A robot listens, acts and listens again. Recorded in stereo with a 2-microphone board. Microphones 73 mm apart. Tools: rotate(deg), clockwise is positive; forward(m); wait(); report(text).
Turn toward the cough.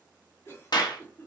rotate(-40)
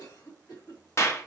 rotate(-105)
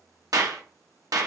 wait()
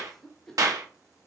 rotate(-10)
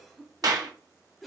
report("Facing the cough, 2 to 4 m away.")